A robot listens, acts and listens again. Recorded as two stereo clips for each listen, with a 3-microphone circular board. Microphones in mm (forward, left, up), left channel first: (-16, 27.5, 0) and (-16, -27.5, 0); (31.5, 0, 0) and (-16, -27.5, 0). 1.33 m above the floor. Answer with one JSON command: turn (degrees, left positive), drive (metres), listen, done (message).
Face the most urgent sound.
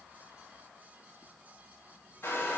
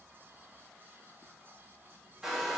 {"listen": true}
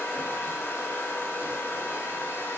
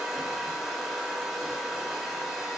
{"listen": true}
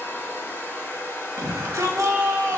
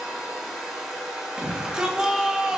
{"turn": -75}
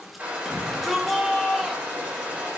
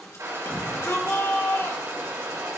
{"done": "Found it: a shout, straight ahead."}